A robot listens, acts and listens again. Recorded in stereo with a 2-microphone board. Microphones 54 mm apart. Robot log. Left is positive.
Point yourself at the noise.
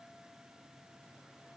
cmd idle
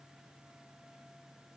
cmd idle
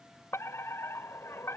note: The fire alarm: about 55° left or 125° left.
cmd yaw +55
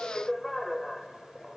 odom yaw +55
end: Facing the fire alarm.